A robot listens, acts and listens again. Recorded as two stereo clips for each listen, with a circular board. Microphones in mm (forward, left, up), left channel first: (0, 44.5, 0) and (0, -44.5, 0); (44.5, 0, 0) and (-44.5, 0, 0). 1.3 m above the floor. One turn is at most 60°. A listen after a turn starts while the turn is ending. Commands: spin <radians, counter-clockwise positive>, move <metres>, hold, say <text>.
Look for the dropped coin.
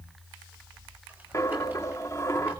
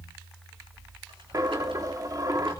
spin 1.05
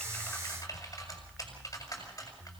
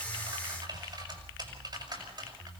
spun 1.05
spin 1.05
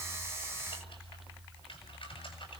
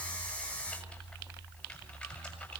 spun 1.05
spin 0.35
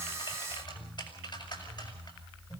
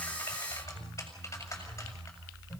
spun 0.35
say Facing where the dropped coin came from. I can't hear it now.